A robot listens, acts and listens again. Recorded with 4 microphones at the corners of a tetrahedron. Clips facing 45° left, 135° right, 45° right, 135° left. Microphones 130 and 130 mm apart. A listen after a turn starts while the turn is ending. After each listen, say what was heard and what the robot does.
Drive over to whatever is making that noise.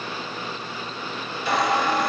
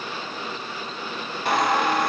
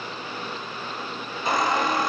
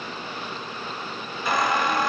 The squeak: 110° right. Turn 110° right.
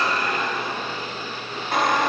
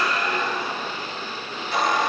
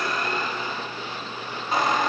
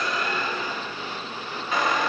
The squeak is now 10° left. Turn 10° left.
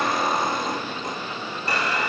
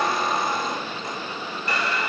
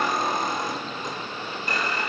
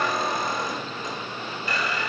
Drive 1.0 m forward.
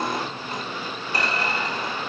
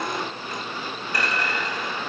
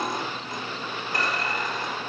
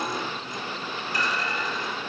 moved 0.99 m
The squeak is now 15° right. Turn 15° right.
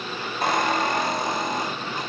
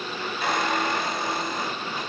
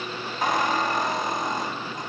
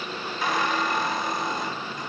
Drive 1.0 m forward.
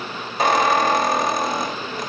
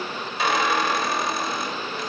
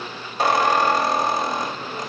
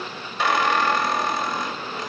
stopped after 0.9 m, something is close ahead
Arrived at the squeak, straight ahead.